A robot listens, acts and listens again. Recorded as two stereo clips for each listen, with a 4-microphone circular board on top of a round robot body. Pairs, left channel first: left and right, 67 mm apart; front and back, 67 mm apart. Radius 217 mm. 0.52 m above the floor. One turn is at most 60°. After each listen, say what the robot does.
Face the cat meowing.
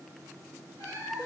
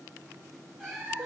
Turn 60° right.
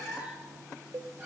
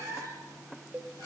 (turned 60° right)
Turn 25° right.
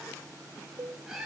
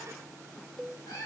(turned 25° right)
Found it: a cat meowing, straight ahead, over 4 m away.